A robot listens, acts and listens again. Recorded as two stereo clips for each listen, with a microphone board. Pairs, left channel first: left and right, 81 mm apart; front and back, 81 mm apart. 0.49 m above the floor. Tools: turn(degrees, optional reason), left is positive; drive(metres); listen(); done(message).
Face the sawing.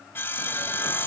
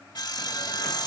turn(degrees=30, reason="The sawing: 30° left.")
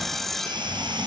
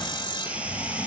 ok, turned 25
done("Found it: sawing, straight ahead, 1 to 2 m away.")